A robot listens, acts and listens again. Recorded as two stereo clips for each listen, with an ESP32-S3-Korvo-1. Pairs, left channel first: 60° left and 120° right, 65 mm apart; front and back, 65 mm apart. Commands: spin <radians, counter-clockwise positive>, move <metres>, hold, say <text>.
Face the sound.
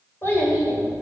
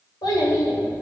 say Found it: a child speaking, straight ahead.